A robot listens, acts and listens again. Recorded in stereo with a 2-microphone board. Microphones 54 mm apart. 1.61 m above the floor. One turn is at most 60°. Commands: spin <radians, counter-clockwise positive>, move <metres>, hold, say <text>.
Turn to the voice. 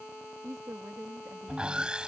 spin -1.05
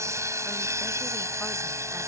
hold
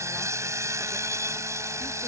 hold
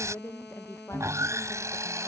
spin 0.96
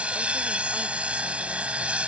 hold
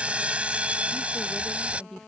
spin 0.17
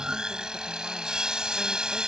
hold
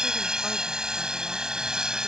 hold
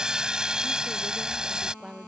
say Facing the woman speaking.